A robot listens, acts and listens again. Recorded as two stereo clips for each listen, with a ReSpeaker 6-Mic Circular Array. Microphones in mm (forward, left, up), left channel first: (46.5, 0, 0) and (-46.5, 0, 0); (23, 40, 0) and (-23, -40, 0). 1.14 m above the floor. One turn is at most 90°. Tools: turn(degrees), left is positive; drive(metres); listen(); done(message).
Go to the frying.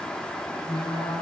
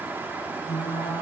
turn(degrees=-15)
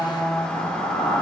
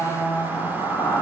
drive(metres=1.0)
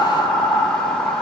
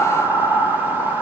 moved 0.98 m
drive(metres=1.0)
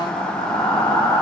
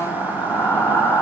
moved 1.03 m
turn(degrees=10)
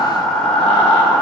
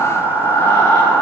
drive(metres=1.0)
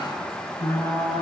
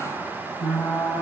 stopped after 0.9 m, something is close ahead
done("Arrived at the frying, straight ahead.")